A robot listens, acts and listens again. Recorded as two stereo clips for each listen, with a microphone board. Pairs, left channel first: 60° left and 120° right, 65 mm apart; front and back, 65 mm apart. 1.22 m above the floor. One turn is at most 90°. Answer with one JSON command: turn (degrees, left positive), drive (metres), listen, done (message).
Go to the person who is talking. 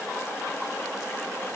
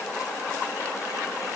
{"listen": true}
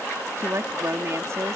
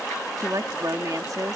{"turn": -90}
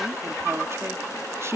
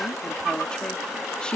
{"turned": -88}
{"turn": -75}
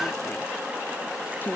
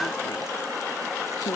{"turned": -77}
{"drive": 1.0}
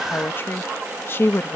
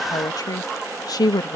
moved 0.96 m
{"turn": 10}
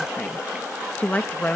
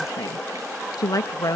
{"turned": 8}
{"drive": 1.0}
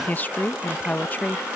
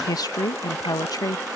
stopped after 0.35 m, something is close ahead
{"done": "Arrived at the woman speaking, straight ahead."}